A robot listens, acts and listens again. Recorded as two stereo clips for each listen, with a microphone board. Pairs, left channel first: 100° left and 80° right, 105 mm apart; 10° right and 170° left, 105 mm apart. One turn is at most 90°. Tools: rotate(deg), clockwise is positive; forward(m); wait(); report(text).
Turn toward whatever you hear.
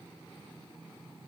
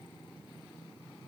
wait()
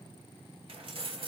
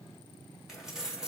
rotate(90)
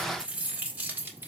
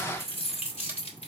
rotate(10)
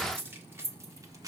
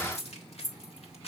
rotate(25)
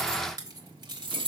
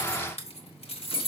rotate(40)
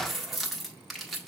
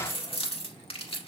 rotate(-10)
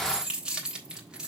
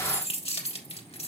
report("Facing the keys jangling.")